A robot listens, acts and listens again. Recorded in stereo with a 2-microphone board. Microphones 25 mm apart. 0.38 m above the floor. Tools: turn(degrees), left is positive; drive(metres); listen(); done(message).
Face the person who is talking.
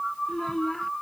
turn(degrees=15)
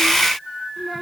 listen()
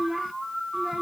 turn(degrees=-10)
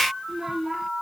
turn(degrees=-15)
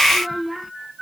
turn(degrees=-10)
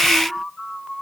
listen()
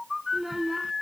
turn(degrees=-10)
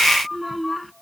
done("Facing the child speaking.")